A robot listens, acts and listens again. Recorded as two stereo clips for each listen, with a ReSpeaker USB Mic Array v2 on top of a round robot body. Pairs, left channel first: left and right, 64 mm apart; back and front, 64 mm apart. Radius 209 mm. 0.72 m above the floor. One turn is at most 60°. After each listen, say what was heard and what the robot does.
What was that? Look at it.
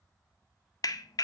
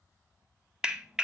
The clap: 80° left. Turn 60° left.
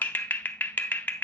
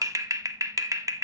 The clap is now 25° left. Turn 25° left.
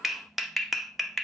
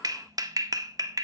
Found it: a clap, straight ahead.